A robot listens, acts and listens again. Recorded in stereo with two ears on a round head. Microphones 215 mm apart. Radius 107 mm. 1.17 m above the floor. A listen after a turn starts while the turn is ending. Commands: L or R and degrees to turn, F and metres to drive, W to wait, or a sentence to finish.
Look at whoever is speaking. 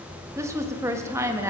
R30
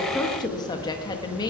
L15
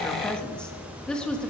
Facing the woman speaking.